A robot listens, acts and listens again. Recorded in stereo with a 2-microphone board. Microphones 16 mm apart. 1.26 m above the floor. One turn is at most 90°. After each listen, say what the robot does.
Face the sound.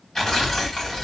Turn 35° left.
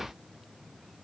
Keep listening.
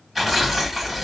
Facing the tearing paper.